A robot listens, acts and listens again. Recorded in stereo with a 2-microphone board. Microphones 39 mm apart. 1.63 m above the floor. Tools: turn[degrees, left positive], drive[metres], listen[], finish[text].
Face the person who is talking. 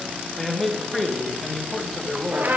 Action: turn[30]
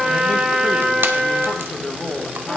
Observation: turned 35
Thought: So it is at 140° left.
Action: turn[140]
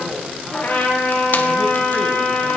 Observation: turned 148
Thought: Nothing new. It was at 10° right.
Action: turn[-10]
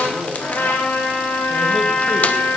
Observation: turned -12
Action: finish[Found it: a man speaking, straight ahead, 1 to 2 m away.]